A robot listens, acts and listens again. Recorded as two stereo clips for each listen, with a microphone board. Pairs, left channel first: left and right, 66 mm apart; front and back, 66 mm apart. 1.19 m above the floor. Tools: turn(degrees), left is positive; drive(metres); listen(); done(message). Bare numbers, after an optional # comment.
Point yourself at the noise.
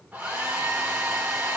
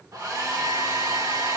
# The hair dryer: 160° right.
turn(-160)
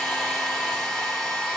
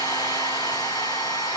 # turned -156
done("Found it: a hair dryer, straight ahead, 2 to 4 m away.")